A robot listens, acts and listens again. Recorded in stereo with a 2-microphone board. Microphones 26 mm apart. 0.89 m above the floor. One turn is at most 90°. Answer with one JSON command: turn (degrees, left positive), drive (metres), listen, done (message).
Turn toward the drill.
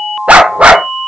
{"listen": true}
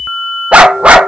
{"listen": true}
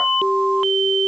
{"done": "I can't make out a drill, only a dog barking."}